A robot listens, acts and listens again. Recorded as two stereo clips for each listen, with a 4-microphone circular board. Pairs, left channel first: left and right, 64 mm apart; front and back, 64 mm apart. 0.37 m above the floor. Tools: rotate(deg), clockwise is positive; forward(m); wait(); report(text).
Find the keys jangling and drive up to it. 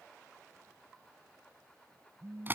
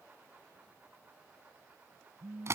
wait()
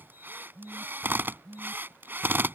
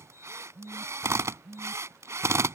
wait()
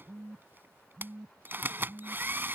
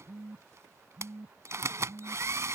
report("I can't make out keys jangling to turn to.")